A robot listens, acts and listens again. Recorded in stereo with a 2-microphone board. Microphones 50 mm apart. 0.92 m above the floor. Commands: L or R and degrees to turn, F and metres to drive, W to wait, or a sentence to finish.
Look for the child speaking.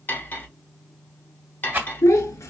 L90
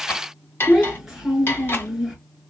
Found it: a child speaking, straight ahead.